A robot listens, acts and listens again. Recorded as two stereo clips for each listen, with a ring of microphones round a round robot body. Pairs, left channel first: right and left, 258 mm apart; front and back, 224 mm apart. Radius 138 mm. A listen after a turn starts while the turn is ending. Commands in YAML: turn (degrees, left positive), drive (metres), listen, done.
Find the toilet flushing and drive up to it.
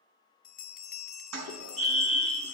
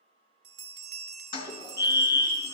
turn: 70
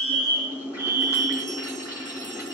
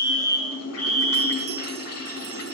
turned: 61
turn: 10
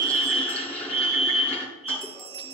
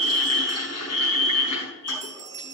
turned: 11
drive: 1.0
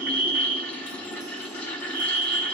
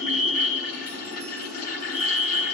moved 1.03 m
drive: 1.0
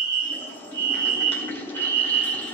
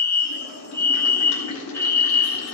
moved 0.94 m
turn: -10
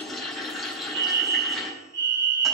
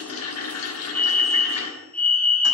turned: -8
drive: 1.0
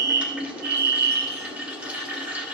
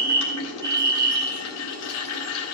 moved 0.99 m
drive: 1.0
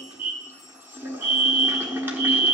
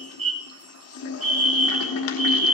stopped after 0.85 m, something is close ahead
turn: 10
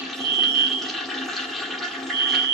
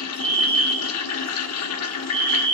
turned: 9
done: "Arrived at the toilet flushing, straight ahead."